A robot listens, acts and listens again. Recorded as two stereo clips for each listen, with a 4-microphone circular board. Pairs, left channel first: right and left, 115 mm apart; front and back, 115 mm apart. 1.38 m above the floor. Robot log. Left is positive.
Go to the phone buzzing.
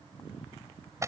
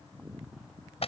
cmd idle
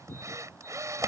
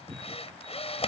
cmd idle
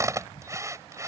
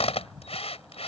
end: I can't make out a phone buzzing to turn to.